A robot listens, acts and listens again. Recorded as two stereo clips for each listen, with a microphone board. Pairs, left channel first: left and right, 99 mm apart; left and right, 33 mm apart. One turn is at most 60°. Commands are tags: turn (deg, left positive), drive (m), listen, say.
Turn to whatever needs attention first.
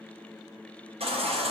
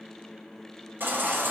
<turn deg="-60"/>
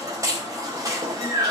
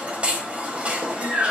<turn deg="-35"/>
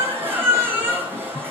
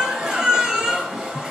<turn deg="-20"/>
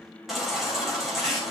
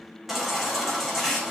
<say>Found it: a baby crying, straight ahead.</say>